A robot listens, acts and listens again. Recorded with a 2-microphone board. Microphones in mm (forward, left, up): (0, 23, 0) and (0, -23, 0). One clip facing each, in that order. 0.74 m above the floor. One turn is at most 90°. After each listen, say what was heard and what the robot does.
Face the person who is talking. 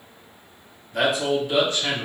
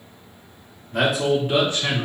The man speaking: about 35° right or 145° right. Turn 35° right.
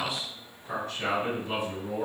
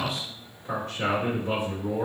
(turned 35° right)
So it is at 130° right. Turn 90° right.
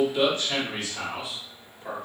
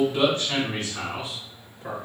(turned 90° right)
The man speaking is now 40° right. Turn 40° right.
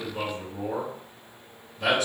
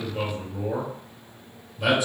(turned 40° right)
The man speaking is now 15° right. Turn 15° right.
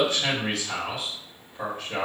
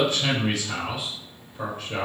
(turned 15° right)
Facing the man speaking.